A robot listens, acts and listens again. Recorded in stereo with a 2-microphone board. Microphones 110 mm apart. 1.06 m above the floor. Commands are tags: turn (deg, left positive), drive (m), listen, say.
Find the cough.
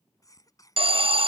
<turn deg="30"/>
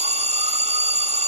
<listen/>
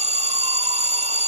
<listen/>
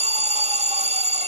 <say>I heard a cough, but can't make it out now. It was about straight ahead or 120° left.</say>